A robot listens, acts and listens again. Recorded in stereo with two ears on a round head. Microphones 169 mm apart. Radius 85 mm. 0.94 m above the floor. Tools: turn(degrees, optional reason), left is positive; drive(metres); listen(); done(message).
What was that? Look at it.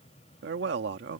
turn(degrees=-65, reason="The man speaking: about 65° right or 115° right.")
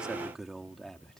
done("Found it: a man speaking, straight ahead.")